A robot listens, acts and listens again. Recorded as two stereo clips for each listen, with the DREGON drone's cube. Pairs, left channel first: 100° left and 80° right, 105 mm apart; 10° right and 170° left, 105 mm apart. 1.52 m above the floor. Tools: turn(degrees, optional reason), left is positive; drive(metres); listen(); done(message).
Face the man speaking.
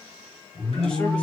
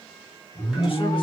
turn(degrees=20, reason="The man speaking: 20° left.")
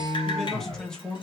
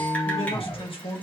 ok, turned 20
turn(degrees=20, reason="The man speaking is now 20° left.")
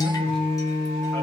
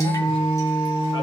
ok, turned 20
listen()
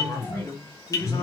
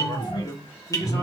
turn(degrees=40, reason="The man speaking is now 40° left.")
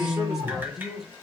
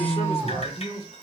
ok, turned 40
turn(degrees=10, reason="The man speaking is now 10° left.")
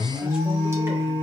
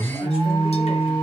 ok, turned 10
listen()
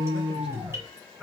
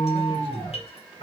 done("Found it: a man speaking, straight ahead.")